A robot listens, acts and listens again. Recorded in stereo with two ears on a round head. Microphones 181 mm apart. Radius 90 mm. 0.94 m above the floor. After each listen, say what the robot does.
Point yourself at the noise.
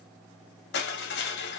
Turn 60° left.
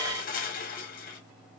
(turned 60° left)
Turn 50° left.
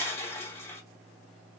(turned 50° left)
Turn 15° left.
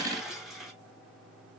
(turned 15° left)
Facing the crushing.